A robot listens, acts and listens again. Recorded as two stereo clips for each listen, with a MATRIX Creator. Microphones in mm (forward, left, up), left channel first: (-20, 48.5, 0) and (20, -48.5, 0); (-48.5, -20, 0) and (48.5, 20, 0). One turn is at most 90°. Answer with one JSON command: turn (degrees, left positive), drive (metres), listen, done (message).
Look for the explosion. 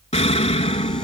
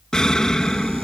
{"turn": 90}
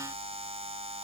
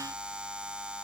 {"turn": 30}
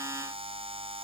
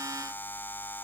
{"done": "Facing where the explosion came from. I can't hear it now."}